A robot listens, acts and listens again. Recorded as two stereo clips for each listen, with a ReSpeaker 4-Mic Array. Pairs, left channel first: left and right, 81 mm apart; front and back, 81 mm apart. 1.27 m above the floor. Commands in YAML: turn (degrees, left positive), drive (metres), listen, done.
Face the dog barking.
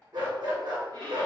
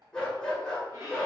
turn: -80
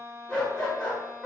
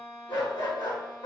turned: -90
turn: 10
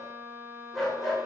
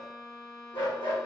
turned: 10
done: "Facing the dog barking."